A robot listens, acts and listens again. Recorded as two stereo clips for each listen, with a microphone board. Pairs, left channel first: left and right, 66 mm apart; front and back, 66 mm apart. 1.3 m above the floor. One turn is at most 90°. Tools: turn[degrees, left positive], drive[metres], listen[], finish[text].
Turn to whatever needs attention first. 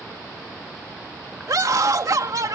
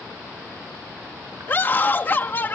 Thought: The scream: 60° right.
Action: turn[-60]
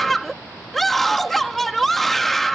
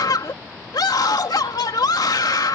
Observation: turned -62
Action: finish[Facing the scream.]